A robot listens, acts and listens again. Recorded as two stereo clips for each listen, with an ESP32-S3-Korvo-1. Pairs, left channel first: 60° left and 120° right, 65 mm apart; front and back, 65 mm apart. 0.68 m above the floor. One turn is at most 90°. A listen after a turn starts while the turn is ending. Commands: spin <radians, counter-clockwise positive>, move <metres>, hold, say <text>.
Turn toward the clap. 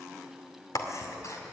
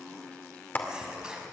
spin 0.96
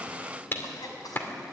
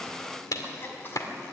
spin 0.17
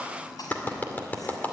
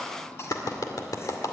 say Found it: a clap, straight ahead, 2 to 4 m away.